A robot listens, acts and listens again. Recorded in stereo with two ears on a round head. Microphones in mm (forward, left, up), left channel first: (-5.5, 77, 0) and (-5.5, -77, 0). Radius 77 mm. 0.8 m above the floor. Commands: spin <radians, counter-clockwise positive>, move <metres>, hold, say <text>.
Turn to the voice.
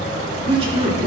spin -0.61
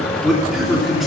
say Found it: a man speaking, straight ahead.